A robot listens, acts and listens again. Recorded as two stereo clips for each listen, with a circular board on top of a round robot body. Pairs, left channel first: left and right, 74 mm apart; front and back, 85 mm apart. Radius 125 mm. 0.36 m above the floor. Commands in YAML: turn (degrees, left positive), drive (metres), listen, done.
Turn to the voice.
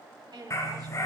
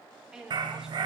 turn: -100
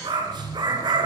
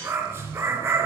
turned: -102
listen: true
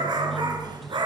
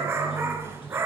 listen: true
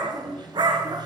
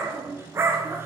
done: "I heard a woman speaking from this way, but can't make it out now."